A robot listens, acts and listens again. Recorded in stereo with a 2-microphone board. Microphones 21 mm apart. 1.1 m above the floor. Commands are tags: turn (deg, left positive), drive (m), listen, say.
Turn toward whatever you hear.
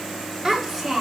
<turn deg="-30"/>
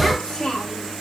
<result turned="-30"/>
<turn deg="30"/>
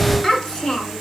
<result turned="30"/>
<turn deg="25"/>
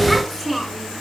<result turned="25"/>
<turn deg="10"/>
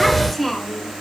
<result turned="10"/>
<say>Found it: a child speaking, straight ahead, 2 to 4 m away.</say>